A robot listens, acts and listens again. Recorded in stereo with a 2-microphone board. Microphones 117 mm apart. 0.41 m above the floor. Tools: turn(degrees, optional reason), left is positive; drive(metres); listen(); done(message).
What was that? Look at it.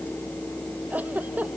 turn(degrees=-30)
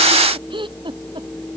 turn(degrees=-135, reason="So it is at 135° right.")
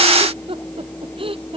turn(degrees=-50, reason="The giggle is now 50° right.")
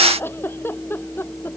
turn(degrees=20, reason="The giggle is now 20° left.")
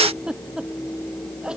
turn(degrees=-10, reason="The giggle is now 10° right.")
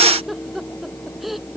done("Facing the giggle.")